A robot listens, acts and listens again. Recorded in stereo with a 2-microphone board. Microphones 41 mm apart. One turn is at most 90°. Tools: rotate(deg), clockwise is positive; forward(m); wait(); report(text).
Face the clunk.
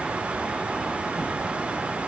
wait()
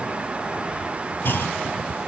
rotate(-60)
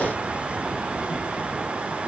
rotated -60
wait()
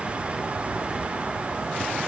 report("I heard a clunk, but can't make it out now. It was about straight ahead or 60° left.")